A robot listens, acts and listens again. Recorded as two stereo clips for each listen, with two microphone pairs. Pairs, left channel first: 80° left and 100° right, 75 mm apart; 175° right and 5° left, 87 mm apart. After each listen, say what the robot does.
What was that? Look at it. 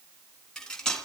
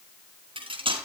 Found it: cutlery clinking, straight ahead, 2 to 4 m away.